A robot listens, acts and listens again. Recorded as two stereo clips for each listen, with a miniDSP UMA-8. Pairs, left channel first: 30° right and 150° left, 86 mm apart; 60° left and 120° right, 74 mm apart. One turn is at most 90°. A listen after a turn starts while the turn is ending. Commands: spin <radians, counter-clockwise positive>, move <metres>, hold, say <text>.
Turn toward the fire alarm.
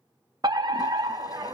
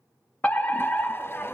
spin 1.57
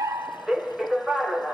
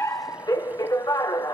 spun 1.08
spin 1.13
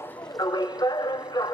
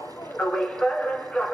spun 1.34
spin -0.17
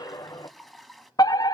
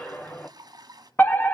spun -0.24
say Found it: a fire alarm, straight ahead.